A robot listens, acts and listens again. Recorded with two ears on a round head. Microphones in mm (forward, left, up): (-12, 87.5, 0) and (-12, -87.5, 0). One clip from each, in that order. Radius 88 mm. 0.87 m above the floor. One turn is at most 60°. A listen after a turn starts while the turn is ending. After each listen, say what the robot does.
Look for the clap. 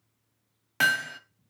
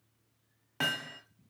Keep listening.
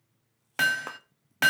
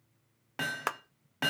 Turn 55° right.
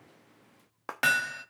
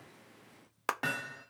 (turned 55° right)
Turn 60° right.
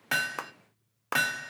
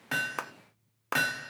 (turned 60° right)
Found it: a clap, straight ahead, under 1 m away.